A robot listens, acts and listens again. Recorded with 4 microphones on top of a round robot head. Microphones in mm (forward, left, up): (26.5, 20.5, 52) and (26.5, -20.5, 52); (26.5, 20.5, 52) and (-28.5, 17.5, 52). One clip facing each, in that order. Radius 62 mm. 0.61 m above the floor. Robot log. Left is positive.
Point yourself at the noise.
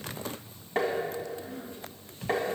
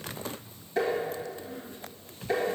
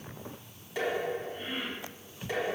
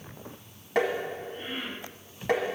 note: The tapping: 145° left.
cmd yaw +145
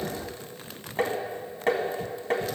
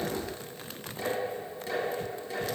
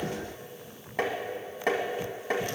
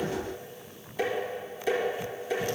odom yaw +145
note: The tapping is now 45° left.
cmd yaw +45
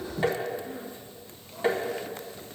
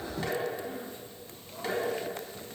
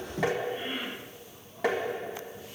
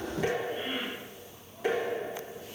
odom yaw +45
note: The tapping is now 20° left.
cmd yaw +20
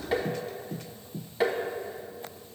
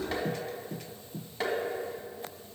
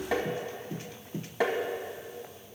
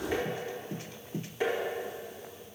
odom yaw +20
end: Facing the tapping.